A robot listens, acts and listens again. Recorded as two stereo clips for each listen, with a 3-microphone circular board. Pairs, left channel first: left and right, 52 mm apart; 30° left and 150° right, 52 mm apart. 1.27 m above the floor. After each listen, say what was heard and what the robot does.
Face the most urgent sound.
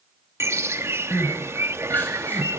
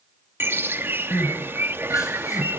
The crying: 35° left. Turn 35° left.
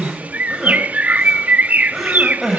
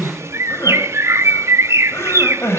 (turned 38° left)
Found it: crying, straight ahead.